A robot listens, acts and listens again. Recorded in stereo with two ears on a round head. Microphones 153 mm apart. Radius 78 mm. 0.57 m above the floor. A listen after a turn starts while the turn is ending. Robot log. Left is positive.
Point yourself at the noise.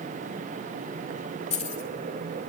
note: The keys jangling: about 40° left or 140° left.
cmd yaw +40
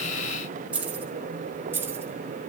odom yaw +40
note: So it is at 10° right.
cmd yaw -10
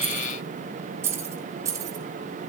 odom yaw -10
note: The keys jangling is now 20° right.
cmd yaw -20
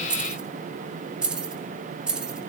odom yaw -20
end: Found it: keys jangling, straight ahead, 2 to 4 m away.